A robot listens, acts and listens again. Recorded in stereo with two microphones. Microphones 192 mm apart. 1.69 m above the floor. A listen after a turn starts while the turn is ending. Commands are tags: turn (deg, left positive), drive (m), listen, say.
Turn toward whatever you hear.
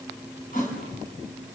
<turn deg="45"/>
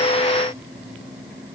<listen/>
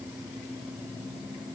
<say>I heard a thud, but can't make it out now. It was about straight ahead or 90° left.</say>